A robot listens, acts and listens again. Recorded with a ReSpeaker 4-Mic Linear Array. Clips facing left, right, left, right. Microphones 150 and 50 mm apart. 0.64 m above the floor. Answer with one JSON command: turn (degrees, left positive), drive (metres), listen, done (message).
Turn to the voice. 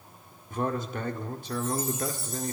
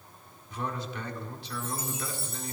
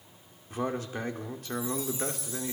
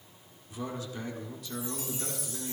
{"turn": 45}
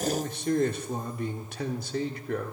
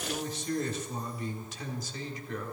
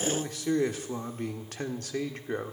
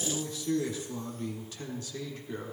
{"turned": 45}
{"turn": 80}
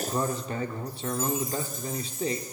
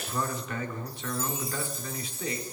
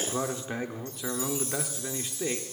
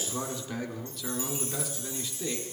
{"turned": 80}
{"turn": 40}
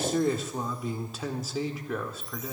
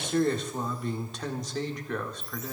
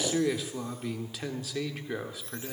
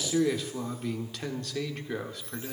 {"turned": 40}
{"done": "Facing the man speaking."}